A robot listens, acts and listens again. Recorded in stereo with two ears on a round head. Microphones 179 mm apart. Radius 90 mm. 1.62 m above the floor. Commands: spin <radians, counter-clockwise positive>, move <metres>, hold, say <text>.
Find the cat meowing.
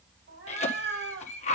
spin -1.05
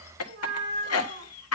spin -0.79
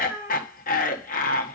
spin -0.17
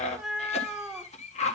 say Facing the cat meowing, 1 to 2 m away.